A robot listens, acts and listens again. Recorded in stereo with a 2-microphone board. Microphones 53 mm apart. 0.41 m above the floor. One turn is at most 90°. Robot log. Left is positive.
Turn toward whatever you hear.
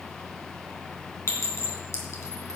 note: The clink: about 70° left or 110° left.
cmd yaw +70
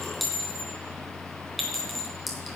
end: Facing the clink.